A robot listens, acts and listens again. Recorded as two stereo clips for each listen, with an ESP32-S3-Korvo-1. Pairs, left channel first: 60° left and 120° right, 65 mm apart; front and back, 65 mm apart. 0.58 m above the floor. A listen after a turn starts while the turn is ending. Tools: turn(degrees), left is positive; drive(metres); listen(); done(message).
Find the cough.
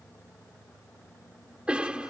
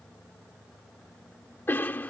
turn(degrees=-50)
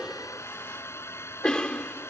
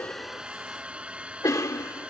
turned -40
turn(degrees=-15)
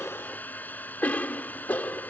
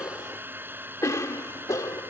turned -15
done("Facing the cough.")